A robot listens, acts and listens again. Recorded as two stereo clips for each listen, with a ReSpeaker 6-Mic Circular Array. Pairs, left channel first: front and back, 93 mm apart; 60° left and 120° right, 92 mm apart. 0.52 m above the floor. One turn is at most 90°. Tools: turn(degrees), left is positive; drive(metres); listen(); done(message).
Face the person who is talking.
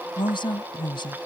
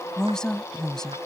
turn(degrees=-25)
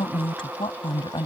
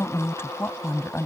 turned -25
done("Found it: a woman speaking, straight ahead.")